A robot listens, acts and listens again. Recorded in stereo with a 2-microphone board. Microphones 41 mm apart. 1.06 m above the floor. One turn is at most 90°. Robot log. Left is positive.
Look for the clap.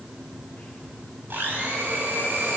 cmd idle
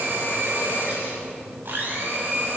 cmd idle
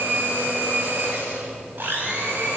end: I can't make out a clap to turn to.